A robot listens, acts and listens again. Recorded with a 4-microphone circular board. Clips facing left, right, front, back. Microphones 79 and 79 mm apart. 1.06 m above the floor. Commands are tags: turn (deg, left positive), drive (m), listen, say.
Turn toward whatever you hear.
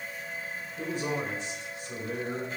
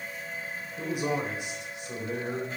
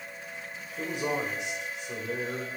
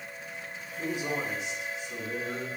<turn deg="-25"/>
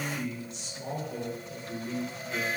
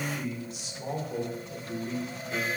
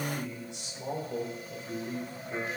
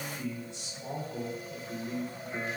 <turn deg="-20"/>
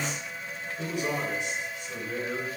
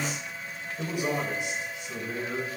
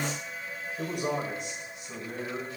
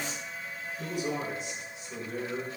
<turn deg="-15"/>
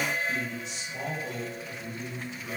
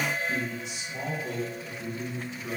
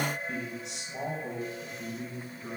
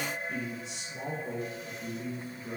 <say>Found it: a man speaking, straight ahead, 2 to 4 m away.</say>